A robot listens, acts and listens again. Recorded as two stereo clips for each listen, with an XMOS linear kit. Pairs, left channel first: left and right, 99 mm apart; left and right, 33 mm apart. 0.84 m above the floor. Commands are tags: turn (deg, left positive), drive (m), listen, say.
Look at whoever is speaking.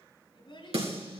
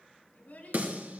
<turn deg="60"/>
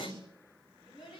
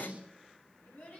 <turn deg="60"/>
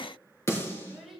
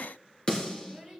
<say>Found it: a child speaking, straight ahead, over 4 m away.</say>